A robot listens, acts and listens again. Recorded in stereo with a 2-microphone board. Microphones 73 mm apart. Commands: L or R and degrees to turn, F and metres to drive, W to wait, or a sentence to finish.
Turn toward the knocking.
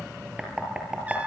R30
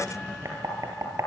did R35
R135
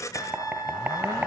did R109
R25
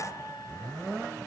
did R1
R25
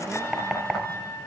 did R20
Found it: knocking, straight ahead.